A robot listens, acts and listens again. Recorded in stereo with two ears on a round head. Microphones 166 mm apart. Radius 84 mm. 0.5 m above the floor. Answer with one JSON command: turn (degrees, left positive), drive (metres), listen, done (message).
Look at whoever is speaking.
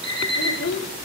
{"turn": 60}
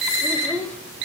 {"turn": 10}
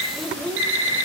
{"done": "Facing the child speaking, 1 to 2 m away."}